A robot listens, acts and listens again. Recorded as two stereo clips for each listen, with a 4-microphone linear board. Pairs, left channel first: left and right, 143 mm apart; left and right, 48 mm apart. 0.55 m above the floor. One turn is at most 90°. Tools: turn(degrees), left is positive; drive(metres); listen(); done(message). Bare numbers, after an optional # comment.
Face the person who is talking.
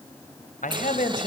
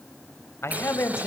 # The man speaking: about 75° left or 105° left.
turn(75)
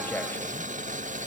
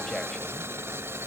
listen()
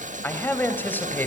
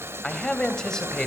# So it is at 15° left.
turn(15)
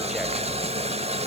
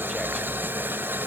listen()
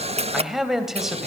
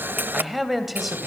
done("Facing the man speaking, 2 to 4 m away.")